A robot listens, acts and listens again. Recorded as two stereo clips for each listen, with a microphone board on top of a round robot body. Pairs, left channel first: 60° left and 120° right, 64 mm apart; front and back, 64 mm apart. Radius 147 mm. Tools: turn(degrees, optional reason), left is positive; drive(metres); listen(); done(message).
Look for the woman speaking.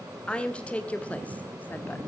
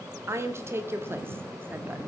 turn(degrees=130, reason="The woman speaking: 130° left.")
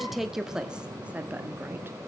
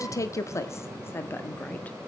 turn(degrees=-60, reason="The woman speaking is now 60° right.")
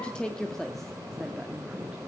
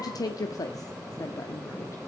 turn(degrees=-25, reason="The woman speaking is now 25° right.")
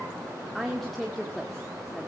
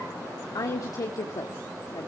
turn(degrees=-30, reason="The woman speaking is now 30° right.")
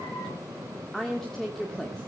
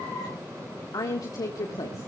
turn(degrees=-25, reason="The woman speaking is now 25° right.")
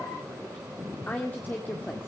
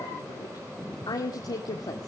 done("Facing the woman speaking, 2 to 4 m away.")